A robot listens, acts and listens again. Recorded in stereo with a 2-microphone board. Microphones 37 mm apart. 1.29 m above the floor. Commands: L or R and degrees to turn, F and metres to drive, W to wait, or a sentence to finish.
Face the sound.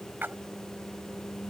R70
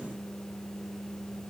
W
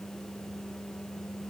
I heard a splash, but can't make it out now. It was about straight ahead or 40° right.